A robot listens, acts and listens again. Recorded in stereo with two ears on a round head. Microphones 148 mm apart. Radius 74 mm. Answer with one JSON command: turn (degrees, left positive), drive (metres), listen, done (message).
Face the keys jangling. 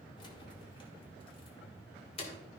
{"turn": 35}
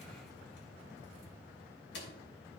{"turn": 100}
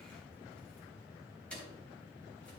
{"done": "Found it: keys jangling, straight ahead, 2 to 4 m away."}